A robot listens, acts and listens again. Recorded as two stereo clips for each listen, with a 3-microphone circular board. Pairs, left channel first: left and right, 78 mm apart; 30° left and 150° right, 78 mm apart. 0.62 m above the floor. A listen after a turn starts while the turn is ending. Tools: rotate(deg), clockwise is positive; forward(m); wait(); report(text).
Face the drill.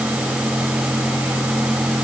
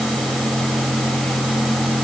wait()
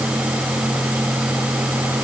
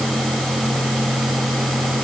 wait()
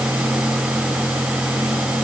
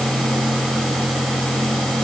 report("I can't make out a drill.")